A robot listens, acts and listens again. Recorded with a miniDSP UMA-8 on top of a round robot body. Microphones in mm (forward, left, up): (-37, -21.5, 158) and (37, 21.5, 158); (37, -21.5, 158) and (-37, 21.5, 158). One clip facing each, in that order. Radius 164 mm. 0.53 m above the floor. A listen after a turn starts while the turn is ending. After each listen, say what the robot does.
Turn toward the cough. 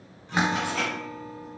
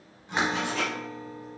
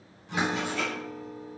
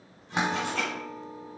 Keep listening.
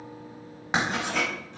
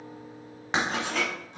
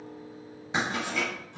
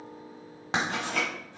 Keep listening.
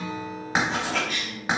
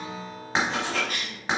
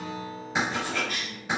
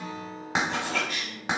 Facing the cough, 1 to 2 m away.